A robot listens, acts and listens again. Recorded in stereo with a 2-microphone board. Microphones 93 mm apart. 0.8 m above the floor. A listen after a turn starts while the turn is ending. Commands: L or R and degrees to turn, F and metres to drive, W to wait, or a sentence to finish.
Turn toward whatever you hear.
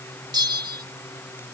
R50
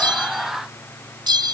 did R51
R65
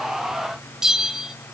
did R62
Facing the bell, under 1 m away.